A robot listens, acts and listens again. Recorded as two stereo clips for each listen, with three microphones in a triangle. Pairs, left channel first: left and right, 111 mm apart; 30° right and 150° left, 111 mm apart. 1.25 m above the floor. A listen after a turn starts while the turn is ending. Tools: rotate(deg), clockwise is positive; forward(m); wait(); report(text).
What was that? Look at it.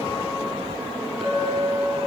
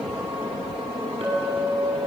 rotate(-180)
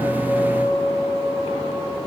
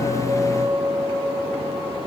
report("Facing the clink, over 4 m away.")